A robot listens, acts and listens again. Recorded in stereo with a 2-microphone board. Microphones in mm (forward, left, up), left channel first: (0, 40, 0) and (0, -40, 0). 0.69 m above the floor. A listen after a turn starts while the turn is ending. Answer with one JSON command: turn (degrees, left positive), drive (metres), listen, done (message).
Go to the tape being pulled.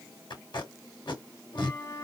{"turn": 75}
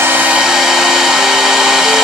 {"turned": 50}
{"listen": true}
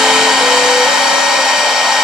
{"listen": true}
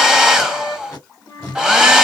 {"turn": 35}
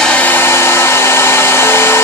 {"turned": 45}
{"turn": -10}
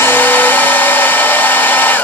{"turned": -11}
{"listen": true}
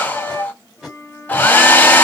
{"drive": 1.0}
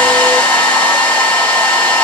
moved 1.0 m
{"listen": true}
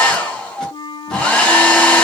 {"listen": true}
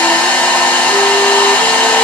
{"done": "Facing where the tape being pulled came from. I can't hear it now. I did not reach it."}